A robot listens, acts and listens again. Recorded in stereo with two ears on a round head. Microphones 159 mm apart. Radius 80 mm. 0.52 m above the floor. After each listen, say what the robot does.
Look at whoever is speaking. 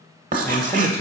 Turn 15° left.
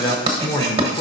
Turn 155° left.
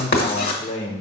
Turn 55° left.
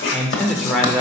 Facing the man speaking.